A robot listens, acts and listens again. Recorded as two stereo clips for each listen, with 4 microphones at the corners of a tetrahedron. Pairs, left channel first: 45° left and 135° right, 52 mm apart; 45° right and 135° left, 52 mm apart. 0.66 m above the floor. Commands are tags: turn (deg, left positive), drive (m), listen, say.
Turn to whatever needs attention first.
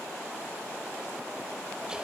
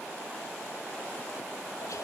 <listen/>
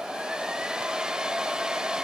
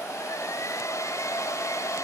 <listen/>
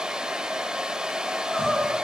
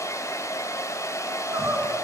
<turn deg="130"/>
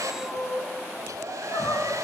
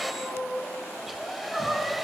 <turn deg="55"/>
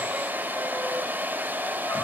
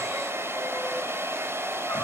<listen/>
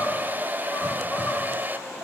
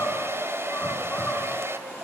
<say>Found it: crying, straight ahead.</say>